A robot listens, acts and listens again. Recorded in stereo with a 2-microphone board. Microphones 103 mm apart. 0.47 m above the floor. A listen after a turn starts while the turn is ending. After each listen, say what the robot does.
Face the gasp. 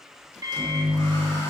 Keep listening.
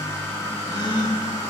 Turn 45° left.
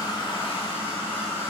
Keep listening.
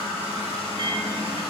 I heard a gasp, but can't make it out now. It was about straight ahead or 90° left.